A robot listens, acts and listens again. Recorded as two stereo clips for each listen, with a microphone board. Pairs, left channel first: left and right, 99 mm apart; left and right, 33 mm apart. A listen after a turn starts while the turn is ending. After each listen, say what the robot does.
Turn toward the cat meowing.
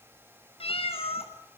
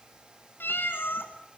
Turn 90° left.
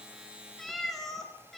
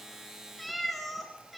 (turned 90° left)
Facing the cat meowing.